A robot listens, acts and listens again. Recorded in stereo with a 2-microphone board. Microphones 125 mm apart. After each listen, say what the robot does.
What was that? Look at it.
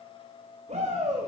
Turn 65° right.
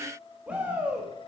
Turn 10° right.
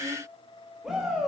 Facing the shout.